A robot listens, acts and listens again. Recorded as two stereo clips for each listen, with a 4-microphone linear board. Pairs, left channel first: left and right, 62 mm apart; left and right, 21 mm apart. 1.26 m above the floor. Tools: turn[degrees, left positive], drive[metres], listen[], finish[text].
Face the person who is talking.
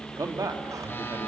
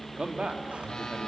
Thought: The man speaking: about 70° right or 110° right.
Action: turn[-70]
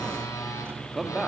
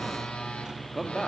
Action: finish[Facing the man speaking, 2 to 4 m away.]